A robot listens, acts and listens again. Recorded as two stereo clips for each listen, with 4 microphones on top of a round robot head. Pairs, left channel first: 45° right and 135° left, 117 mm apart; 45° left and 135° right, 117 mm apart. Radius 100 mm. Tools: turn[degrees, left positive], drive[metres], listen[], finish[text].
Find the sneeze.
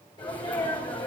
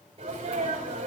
Thought: The sneeze: 95° right.
Action: turn[-95]
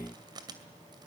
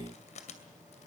Action: finish[I heard a sneeze from this way, but can't make it out now.]